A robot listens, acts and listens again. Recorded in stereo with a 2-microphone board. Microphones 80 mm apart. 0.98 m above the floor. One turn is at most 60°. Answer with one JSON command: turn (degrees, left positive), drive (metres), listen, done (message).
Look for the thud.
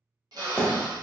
{"turn": 30}
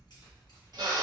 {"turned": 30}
{"listen": true}
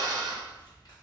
{"done": "I heard a thud, but can't make it out now. It was about 20° right or 140° left."}